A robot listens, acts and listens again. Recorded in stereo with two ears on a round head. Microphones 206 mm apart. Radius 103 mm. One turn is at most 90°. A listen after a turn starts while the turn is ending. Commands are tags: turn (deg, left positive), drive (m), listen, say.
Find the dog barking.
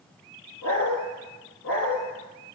<turn deg="65"/>
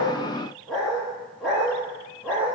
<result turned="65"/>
<say>Facing the dog barking.</say>